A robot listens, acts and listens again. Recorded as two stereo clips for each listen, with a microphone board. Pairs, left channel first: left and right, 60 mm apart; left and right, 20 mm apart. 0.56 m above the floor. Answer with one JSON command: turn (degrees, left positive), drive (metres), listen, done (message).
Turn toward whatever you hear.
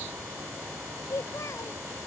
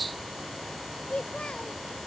{"turn": 60}
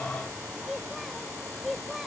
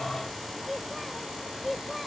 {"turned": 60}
{"done": "Facing the child speaking."}